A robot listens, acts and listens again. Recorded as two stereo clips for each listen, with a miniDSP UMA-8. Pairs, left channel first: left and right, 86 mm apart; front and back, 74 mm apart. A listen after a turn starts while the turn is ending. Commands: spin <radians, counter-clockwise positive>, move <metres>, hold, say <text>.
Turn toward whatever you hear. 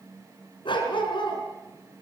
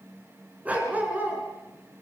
spin 2.01
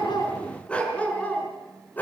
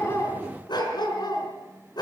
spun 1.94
spin 0.35
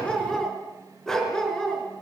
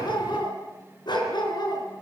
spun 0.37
spin 0.17
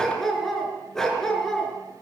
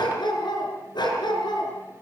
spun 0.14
say Facing the dog barking, over 4 m away.